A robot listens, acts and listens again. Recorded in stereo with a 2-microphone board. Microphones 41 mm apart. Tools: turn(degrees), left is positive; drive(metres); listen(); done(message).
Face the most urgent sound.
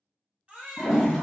turn(degrees=-25)
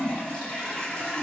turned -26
listen()
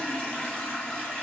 listen()
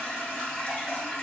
done("I heard a baby crying, but can't make it out now. It was about straight ahead or 130° right.")